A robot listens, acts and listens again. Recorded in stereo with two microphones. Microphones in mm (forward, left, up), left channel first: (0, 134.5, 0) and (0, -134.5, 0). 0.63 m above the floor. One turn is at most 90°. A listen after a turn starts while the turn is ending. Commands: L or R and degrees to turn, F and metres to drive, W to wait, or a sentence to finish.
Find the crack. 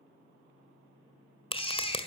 L20
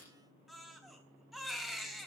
W
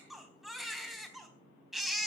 I heard a crack, but can't make it out now. It was about straight ahead or 140° left.